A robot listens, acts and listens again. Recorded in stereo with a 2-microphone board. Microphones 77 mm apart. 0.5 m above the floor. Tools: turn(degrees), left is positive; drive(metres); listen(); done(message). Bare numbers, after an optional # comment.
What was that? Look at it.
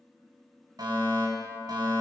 # The fire alarm: about 60° right or 120° right.
turn(-60)
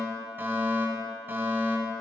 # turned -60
# So it is at 30° right.
turn(-30)
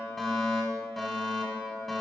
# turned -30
done("Facing the fire alarm, 2 to 4 m away.")